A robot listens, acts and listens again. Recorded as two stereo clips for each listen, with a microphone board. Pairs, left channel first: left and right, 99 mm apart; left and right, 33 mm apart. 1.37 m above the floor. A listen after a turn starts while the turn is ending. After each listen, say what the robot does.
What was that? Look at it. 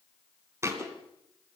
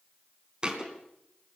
Turn 30° right.
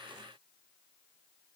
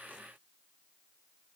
Keep listening.
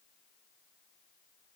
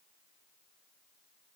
I heard a thud, but can't make it out now. It was about straight ahead or 120° right.